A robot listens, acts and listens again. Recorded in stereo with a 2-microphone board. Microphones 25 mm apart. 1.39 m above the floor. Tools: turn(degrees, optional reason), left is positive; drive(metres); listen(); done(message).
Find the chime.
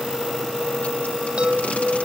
turn(degrees=-40, reason="The chime: about 40° right or 140° right.")
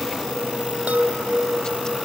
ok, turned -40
turn(degrees=-105, reason="So it is at 105° right.")
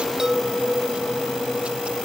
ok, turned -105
turn(degrees=-20, reason="The chime is now 20° right.")
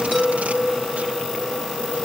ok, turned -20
done("Found it: a chime, straight ahead.")